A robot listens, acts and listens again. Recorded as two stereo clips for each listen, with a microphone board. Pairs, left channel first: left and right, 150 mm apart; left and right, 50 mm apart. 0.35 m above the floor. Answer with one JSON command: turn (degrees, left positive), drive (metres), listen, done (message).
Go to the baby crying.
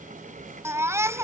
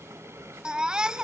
{"turn": -20}
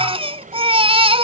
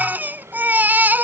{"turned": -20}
{"turn": -140}
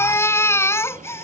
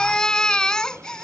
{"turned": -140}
{"turn": 20}
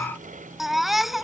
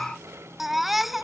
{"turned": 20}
{"drive": 1.0}
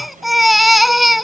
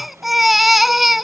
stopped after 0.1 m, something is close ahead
{"done": "Blocked. The baby crying is further on, straight ahead."}